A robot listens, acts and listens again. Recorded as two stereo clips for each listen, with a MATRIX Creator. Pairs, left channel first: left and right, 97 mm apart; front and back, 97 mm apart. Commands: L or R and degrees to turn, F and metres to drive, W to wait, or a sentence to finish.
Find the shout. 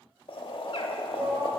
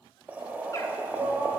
R140
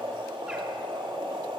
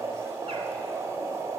W
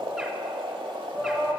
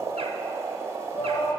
R10
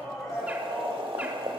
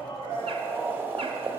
Facing the shout, 1 to 2 m away.